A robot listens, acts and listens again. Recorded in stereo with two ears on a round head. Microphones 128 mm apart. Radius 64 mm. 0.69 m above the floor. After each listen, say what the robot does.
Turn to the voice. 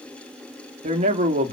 Turn 45° right.
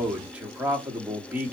Turn 10° right.
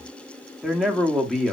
Facing the man speaking, 1 to 2 m away.